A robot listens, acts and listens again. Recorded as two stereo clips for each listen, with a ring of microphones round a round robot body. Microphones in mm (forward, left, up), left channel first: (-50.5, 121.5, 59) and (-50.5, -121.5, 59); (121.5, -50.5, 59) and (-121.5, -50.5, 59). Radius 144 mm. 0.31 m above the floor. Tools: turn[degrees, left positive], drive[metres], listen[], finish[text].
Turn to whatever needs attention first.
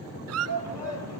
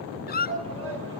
Thought: The shout: 110° left.
Action: turn[110]
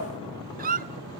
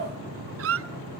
Action: listen[]
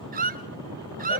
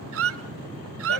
Action: listen[]
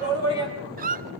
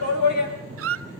Thought: The shout is now 15° left.
Action: turn[15]
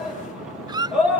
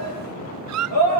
Action: finish[Found it: a shout, straight ahead, over 4 m away.]